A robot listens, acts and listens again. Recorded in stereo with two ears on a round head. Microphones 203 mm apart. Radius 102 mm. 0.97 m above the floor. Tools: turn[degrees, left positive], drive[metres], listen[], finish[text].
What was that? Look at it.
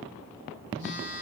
Thought: The phone buzzing: about 60° left or 120° left.
Action: turn[60]
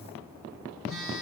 Action: finish[Found it: a phone buzzing, straight ahead.]